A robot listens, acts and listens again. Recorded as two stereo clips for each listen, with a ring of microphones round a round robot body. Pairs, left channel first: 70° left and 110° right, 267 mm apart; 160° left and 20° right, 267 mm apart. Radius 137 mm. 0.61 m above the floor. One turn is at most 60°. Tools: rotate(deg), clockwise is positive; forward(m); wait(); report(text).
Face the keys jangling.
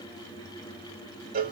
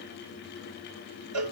wait()
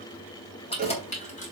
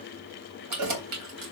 report("Facing the keys jangling, 2 to 4 m away.")